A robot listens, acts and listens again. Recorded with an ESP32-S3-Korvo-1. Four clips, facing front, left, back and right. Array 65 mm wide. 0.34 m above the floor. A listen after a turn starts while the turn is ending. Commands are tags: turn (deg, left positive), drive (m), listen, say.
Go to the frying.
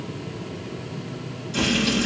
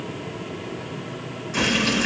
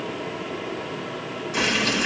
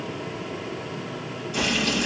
<turn deg="140"/>
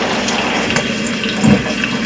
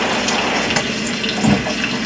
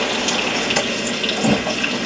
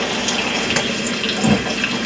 <turn deg="15"/>
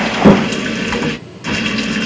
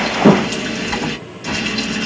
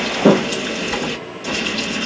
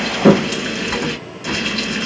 <drive m="1.0"/>
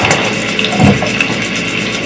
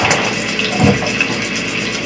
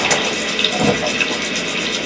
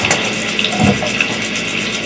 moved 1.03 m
<turn deg="15"/>
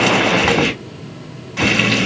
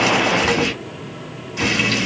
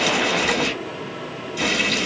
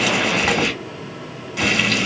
<drive m="1.0"/>
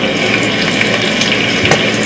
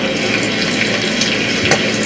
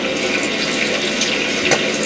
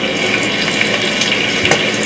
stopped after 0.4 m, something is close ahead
<say>Arrived at the frying, straight ahead.</say>